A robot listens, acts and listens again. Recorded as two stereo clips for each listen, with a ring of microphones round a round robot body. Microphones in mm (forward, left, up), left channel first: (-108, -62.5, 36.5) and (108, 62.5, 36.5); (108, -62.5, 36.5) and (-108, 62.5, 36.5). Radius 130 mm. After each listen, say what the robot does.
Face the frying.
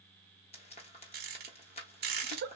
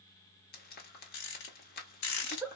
Turn 85° right.
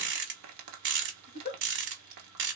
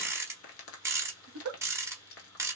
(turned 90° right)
Turn 10° left.
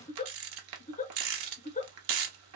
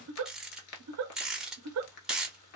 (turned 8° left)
Facing the frying, under 1 m away.